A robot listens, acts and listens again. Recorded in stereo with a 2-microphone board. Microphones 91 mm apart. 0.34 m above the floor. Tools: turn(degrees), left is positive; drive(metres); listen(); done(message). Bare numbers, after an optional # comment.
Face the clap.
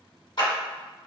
# The clap: about 60° left or 120° left.
turn(60)
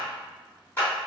# So it is at 30° left.
turn(30)
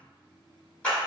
# The clap is now 15° left.
turn(15)
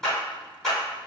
done("Found it: a clap, straight ahead, 1 to 2 m away.")